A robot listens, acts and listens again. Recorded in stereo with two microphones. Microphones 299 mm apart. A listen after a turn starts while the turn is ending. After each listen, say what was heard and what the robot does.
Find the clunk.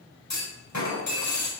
The clunk: about 70° left or 110° left. Turn 70° left.
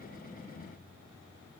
Keep listening.
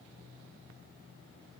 I heard a clunk, but can't make it out now. It was about straight ahead or 40° left.